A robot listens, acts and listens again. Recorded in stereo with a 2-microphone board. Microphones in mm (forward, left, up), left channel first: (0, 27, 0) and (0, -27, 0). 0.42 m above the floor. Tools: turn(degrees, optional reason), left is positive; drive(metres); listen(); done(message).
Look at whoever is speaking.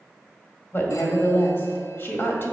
turn(degrees=40, reason="The woman speaking: about 40° left or 140° left.")
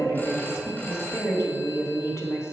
turn(degrees=95, reason="So it is at 95° left.")
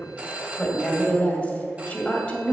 turn(degrees=25, reason="The woman speaking is now 25° left.")
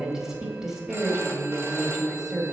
turn(degrees=-10, reason="The woman speaking is now 10° right.")
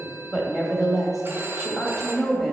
done("Facing the woman speaking, 1 to 2 m away.")